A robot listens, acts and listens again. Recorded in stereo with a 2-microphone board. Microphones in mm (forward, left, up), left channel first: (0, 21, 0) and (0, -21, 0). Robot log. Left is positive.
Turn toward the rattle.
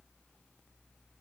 cmd idle
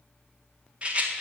note: The rattle: about 30° right or 150° right.
cmd yaw -30
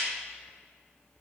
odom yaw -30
cmd idle
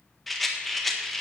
end: Found it: a rattle, straight ahead.